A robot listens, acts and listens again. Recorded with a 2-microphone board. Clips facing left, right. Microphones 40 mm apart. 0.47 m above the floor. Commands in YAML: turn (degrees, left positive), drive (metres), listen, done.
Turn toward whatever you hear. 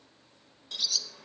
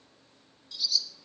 turn: 70
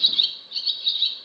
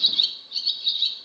turn: 20
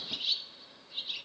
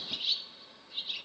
done: "Facing the bird, under 1 m away."